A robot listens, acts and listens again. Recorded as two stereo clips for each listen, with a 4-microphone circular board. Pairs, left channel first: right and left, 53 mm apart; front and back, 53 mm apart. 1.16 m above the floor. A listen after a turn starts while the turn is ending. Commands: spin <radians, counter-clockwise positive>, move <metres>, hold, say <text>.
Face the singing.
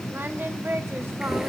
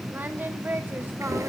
spin 2.27
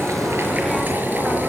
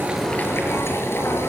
hold
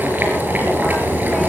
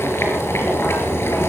hold
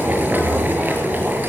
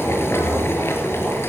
say I heard singing from this way, but can't make it out now.